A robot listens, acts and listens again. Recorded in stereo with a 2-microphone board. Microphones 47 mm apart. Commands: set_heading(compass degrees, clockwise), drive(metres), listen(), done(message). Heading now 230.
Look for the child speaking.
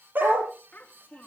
set_heading(195)
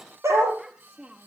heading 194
set_heading(214)
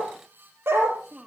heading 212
set_heading(232)
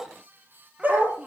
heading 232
listen()
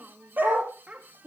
set_heading(267)
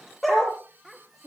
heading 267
done("Found it: a child speaking, straight ahead.")